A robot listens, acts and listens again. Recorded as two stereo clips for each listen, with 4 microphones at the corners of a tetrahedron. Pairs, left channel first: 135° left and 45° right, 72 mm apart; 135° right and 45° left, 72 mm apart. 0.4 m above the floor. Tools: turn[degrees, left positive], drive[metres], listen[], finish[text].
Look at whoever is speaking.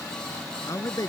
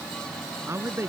Thought: The man speaking: 95° left.
Action: turn[95]
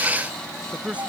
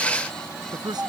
Thought: The man speaking is now 25° left.
Action: turn[25]
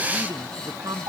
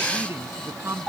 Thought: The man speaking is now 10° right.
Action: turn[-10]
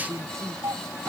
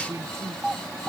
Action: finish[Facing the man speaking.]